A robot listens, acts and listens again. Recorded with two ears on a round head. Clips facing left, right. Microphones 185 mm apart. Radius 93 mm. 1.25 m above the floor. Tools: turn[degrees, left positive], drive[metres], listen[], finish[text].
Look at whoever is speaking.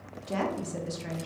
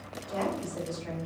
Action: turn[90]
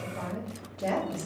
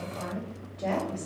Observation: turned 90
Thought: So it is at 10° left.
Action: turn[10]
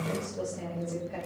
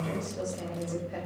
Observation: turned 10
Action: finish[Found it: a woman speaking, straight ahead.]